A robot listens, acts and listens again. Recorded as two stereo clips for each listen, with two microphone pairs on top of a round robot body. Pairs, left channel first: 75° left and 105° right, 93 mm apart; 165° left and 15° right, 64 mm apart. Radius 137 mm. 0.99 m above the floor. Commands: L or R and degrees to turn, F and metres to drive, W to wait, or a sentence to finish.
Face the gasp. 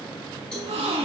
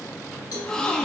R110
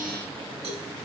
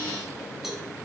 I heard a gasp from this way, but can't make it out now.